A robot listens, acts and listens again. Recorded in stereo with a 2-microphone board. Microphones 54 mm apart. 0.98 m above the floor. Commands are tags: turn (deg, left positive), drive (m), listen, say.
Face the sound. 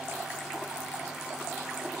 <listen/>
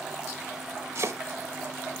<turn deg="-60"/>
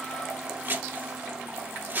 <turn deg="-40"/>
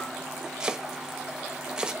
<turn deg="-20"/>
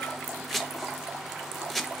<say>Found it: chopping, straight ahead.</say>